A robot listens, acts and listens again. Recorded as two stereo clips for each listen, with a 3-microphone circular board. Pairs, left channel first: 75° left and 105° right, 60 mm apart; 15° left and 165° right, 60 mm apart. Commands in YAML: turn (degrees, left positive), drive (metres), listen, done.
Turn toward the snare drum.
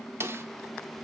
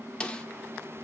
turn: -60
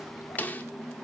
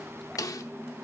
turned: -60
turn: 15
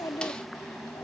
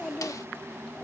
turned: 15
listen: true
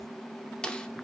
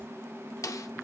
done: "Found it: a snare drum, straight ahead, 1 to 2 m away."